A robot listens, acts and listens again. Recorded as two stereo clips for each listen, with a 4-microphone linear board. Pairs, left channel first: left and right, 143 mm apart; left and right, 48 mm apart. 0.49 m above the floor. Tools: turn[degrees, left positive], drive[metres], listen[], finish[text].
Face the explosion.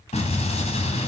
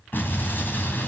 Thought: The explosion: about 50° left or 130° left.
Action: turn[50]
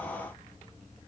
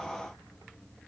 Action: listen[]
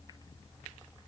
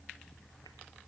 Action: finish[I heard an explosion, but can't make it out now. It was about straight ahead or 80° left.]